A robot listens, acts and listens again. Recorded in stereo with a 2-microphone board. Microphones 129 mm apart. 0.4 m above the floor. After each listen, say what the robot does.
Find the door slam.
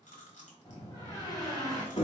Turn 30° left.
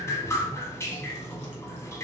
Keep listening.
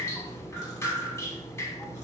I heard a door slam, but can't make it out now. It was about straight ahead or 120° left.